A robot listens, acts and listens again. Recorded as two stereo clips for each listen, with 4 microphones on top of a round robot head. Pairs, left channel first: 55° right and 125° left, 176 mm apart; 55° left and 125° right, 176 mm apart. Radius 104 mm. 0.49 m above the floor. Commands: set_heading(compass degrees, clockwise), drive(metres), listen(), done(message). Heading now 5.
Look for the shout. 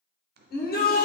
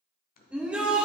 set_heading(50)
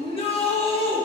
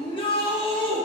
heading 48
done("Found it: a shout, straight ahead, 1 to 2 m away.")